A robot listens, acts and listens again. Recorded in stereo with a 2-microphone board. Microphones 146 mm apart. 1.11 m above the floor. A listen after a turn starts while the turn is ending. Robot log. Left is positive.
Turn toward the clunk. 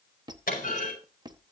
cmd yaw +90
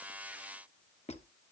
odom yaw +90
end: Facing where the clunk came from. I can't hear it now.